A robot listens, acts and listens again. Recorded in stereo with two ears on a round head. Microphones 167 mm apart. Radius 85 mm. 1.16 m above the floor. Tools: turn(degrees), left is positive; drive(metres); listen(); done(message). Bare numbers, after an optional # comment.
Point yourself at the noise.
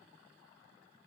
listen()
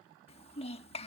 # The child speaking: about 35° left or 145° left.
turn(35)
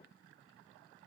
listen()
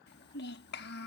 # So it is at 110° left.
turn(110)
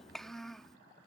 done("Found it: a child speaking, straight ahead.")